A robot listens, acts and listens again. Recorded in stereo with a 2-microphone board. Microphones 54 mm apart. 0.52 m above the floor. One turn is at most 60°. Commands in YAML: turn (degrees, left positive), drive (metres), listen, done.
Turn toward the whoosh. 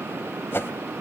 turn: 50
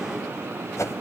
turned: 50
turn: 60
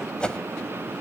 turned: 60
turn: 20
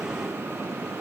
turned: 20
listen: true
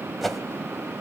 done: "Facing the whoosh, 1 to 2 m away."